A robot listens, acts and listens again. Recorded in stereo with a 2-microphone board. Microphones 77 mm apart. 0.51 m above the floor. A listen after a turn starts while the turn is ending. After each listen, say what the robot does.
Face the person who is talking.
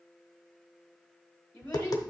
Turn 20° left.
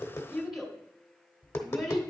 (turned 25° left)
Found it: a child speaking, straight ahead.